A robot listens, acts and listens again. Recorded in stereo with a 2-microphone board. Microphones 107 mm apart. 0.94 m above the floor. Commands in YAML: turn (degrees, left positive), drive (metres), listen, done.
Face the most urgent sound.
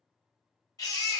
turn: 35
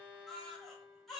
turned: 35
done: "Facing the baby crying, 1 to 2 m away."